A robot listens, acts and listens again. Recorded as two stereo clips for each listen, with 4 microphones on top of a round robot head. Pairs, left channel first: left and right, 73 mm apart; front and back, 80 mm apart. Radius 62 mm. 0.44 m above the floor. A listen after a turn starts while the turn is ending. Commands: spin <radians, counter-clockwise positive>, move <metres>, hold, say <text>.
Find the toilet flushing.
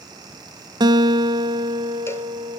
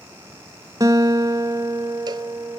hold
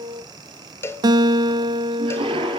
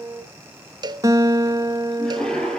spin -1.48
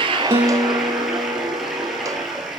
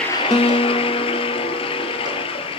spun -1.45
say Facing the toilet flushing, 2 to 4 m away.